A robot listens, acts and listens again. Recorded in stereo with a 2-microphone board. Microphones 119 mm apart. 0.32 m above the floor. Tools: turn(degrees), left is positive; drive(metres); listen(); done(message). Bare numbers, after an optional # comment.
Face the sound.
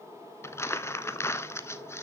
# The crumpling: about 20° left or 160° left.
turn(20)
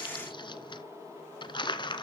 # So it is at 140° left.
turn(140)
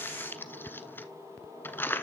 # The crumpling is now 20° left.
turn(20)
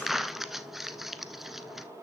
done("Facing the crumpling.")